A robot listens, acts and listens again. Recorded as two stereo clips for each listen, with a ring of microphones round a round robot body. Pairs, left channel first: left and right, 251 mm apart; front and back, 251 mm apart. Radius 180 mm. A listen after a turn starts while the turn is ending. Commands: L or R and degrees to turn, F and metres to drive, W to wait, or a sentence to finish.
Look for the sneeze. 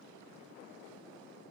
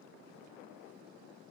W
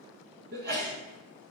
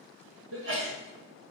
R140
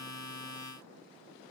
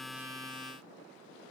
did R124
R20
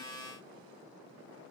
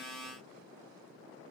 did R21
Facing where the sneeze came from. I can't hear it now.